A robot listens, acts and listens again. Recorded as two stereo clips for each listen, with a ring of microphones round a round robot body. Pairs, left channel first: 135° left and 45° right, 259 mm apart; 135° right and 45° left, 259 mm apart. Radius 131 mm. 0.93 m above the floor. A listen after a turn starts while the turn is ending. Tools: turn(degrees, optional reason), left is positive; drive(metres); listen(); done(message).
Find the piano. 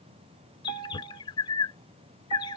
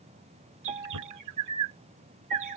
turn(degrees=-20, reason="The piano: 20° right.")
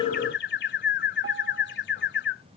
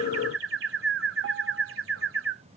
listen()
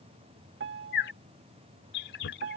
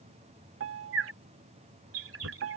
done("Found it: a piano, straight ahead.")